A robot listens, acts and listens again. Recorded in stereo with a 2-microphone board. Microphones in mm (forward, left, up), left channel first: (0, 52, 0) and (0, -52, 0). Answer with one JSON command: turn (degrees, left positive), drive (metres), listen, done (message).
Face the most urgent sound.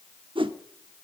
{"listen": true}
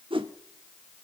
{"listen": true}
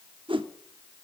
{"done": "I can't make out anything urgent to turn to."}